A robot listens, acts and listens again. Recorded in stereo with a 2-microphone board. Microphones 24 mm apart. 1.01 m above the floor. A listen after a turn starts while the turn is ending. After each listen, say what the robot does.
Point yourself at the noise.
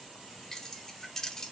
Turn 20° left.
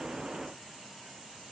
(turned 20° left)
Keep listening.
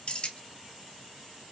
Turn 135° left.
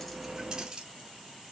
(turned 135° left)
Turn 30° right.
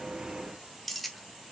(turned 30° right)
Facing the keys jangling.